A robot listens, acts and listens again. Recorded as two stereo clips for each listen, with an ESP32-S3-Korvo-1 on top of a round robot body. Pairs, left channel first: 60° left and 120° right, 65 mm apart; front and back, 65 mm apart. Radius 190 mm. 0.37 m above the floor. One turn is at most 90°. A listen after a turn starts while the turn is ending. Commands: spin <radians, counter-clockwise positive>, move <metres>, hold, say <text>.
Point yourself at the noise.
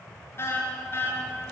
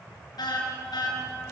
say Facing the car horn.